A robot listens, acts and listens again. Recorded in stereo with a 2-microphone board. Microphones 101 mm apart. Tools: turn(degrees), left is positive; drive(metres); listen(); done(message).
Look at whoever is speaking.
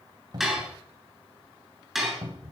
listen()
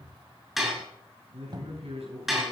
turn(degrees=-70)
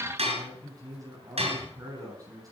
turn(degrees=-35)
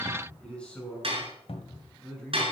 turn(degrees=10)
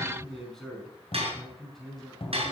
done("Found it: a man speaking, straight ahead, over 4 m away.")